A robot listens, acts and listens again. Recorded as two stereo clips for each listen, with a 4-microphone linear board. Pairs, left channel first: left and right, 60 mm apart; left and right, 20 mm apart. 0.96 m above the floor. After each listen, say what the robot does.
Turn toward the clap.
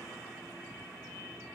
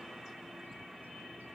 Keep listening.
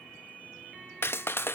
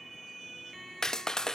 Turn 35° left.
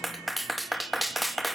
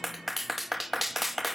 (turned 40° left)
Found it: a clap, straight ahead, under 1 m away.